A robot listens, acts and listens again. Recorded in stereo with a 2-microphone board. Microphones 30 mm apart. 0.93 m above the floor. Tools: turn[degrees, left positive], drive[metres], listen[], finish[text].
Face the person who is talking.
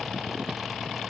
Action: listen[]
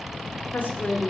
Thought: The woman speaking: about 70° left or 110° left.
Action: turn[70]
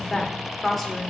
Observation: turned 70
Action: finish[Found it: a woman speaking, straight ahead, 2 to 4 m away.]